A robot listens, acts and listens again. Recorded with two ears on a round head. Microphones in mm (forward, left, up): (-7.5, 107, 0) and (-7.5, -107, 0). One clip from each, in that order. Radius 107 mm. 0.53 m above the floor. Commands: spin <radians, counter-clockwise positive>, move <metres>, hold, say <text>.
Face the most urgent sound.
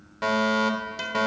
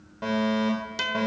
spin 0.79
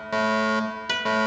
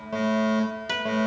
spin 1.22
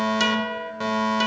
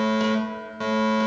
spin 0.17
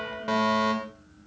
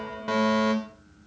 say Found it: a fire alarm, straight ahead, 2 to 4 m away.